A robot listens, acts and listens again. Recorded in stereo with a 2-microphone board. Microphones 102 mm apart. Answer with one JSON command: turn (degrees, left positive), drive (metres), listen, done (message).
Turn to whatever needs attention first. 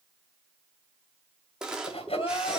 {"turn": 65}
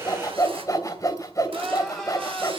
{"done": "Facing the crying."}